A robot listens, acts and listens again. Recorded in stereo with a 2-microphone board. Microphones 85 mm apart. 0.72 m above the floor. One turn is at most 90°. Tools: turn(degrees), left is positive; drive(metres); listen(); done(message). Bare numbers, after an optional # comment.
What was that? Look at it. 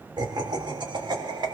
# The laughter: about 60° right or 120° right.
turn(-60)
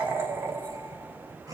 # So it is at 40° right.
turn(-40)
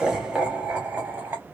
# The laughter is now 20° right.
turn(-20)
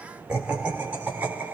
# The laughter is now 15° right.
turn(-15)
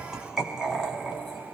done("Found it: laughter, straight ahead, 1 to 2 m away.")